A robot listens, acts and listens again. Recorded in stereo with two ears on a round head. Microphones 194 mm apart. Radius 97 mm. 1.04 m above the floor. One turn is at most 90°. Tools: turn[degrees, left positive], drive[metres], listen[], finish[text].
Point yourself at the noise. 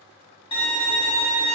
Thought: The violin: about 25° left or 155° left.
Action: turn[25]
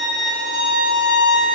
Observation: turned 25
Action: finish[Facing the violin, 1 to 2 m away.]